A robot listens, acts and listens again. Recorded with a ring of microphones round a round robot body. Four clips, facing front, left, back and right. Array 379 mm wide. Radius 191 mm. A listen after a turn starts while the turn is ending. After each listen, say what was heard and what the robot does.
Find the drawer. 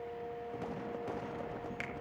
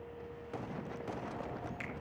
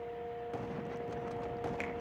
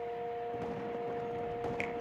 Keep listening.
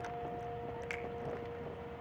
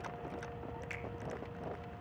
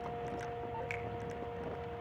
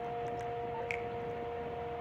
Keep listening.
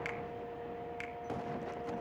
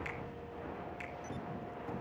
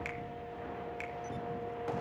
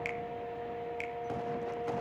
I can't make out a drawer to turn to.